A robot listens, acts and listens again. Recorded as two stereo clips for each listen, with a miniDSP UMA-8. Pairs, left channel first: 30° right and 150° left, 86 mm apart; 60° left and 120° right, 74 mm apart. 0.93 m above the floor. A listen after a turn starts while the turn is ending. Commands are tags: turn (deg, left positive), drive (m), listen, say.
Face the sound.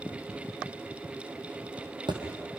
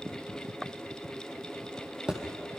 <turn deg="160"/>
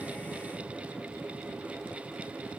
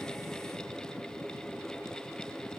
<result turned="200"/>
<turn deg="-40"/>
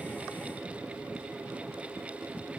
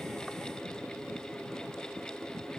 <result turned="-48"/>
<turn deg="10"/>
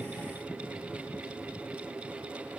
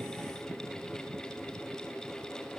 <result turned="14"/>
<say>I heard a thud from this way, but can't make it out now.</say>